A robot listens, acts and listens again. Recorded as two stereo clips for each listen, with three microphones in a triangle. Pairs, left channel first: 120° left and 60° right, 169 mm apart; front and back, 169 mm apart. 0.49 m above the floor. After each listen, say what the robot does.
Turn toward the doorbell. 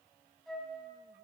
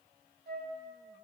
Keep listening.
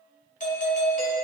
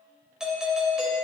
Turn 95° left.
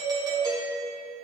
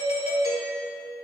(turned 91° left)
Found it: a doorbell, straight ahead, 2 to 4 m away.